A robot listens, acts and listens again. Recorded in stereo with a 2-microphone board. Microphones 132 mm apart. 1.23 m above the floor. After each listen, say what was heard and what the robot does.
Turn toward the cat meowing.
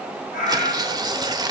Turn 90° left.
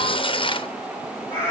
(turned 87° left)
So it is at 20° left. Turn 20° left.
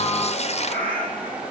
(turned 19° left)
The cat meowing is now 10° left. Turn 10° left.
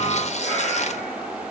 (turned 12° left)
Keep listening.
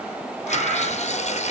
The cat meowing is now 10° left. Turn 10° left.
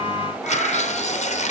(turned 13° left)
Found it: a cat meowing, straight ahead.